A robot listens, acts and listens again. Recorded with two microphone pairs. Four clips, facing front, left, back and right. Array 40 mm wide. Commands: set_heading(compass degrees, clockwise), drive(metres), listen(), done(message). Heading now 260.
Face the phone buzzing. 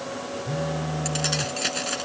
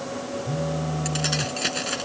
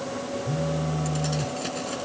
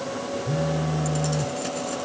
set_heading(290)
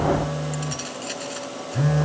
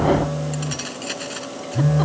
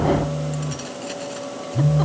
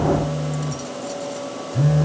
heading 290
done("Facing the phone buzzing.")